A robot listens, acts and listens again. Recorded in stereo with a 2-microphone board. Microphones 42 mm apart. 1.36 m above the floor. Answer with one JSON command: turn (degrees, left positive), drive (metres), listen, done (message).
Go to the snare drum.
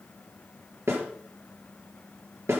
{"turn": -75}
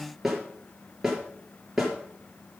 {"drive": 1.0}
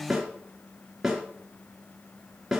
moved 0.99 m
{"turn": -10}
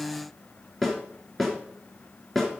{"drive": 1.0}
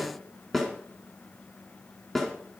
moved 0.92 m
{"drive": 1.0}
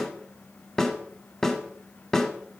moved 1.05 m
{"turn": 15}
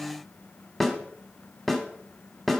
{"drive": 1.0}
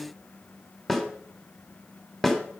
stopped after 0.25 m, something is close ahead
{"turn": 10}
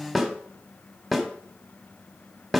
{"done": "I am next to the snare drum."}